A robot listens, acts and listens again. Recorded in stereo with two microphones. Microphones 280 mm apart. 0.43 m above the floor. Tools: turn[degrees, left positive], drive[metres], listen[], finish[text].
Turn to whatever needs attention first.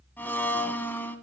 Action: listen[]
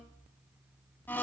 Action: listen[]
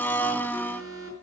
Thought: The alarm: about 50° right or 130° right.
Action: turn[-50]
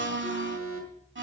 Thought: So it is at 75° right.
Action: turn[-75]
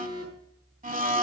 Thought: The alarm is now 30° left.
Action: turn[30]
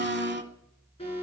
Thought: The alarm is now 20° left.
Action: turn[20]
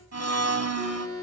Action: finish[Facing the alarm, over 4 m away.]